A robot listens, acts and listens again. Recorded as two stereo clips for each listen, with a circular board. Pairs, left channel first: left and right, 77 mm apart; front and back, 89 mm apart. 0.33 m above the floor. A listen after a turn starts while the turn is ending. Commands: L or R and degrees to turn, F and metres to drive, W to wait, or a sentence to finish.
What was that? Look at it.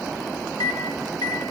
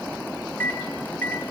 L70
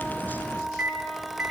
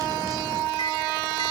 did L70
Found it: a microwave, straight ahead.